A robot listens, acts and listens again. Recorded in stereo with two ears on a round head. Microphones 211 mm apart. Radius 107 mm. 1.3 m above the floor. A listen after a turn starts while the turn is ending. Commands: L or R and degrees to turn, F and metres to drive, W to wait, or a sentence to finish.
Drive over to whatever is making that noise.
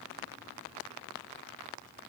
W
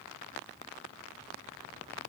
W
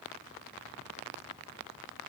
I can't make out anything to turn to.